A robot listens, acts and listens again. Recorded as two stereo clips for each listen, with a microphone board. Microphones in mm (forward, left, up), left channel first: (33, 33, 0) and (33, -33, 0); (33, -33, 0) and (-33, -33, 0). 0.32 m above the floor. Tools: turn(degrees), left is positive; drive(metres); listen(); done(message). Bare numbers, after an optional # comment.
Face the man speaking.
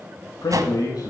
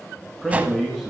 # The man speaking: 90° left.
turn(90)
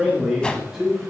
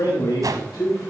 done("Found it: a man speaking, straight ahead.")